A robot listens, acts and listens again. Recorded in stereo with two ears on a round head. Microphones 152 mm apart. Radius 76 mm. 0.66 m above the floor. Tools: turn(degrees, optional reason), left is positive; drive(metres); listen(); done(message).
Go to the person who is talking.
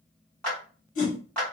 listen()
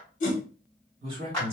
turn(degrees=-35, reason="The man speaking: about 35° right or 145° right.")
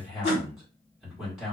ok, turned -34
drive(metres=1.0)
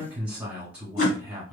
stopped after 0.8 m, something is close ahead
turn(degrees=-10, reason="The man speaking is now 10° right.")
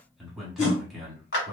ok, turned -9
done("Arrived at the man speaking, straight ahead.")